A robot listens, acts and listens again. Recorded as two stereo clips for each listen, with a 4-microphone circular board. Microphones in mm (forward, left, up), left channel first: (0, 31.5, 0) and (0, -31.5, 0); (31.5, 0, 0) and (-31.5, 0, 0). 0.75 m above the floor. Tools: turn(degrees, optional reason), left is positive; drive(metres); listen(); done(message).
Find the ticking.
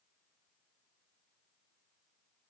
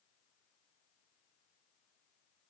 listen()
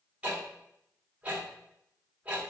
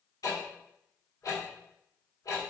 turn(degrees=-20, reason="The ticking: 20° right.")
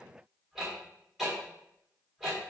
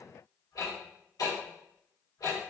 done("Facing the ticking.")